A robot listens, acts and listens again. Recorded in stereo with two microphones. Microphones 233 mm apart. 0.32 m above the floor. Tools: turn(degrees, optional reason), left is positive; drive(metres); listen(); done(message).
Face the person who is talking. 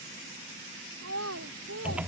turn(degrees=-90)
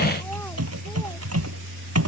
listen()
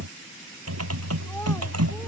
listen()
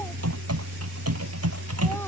done("I heard a child speaking from this way, but can't make it out now.")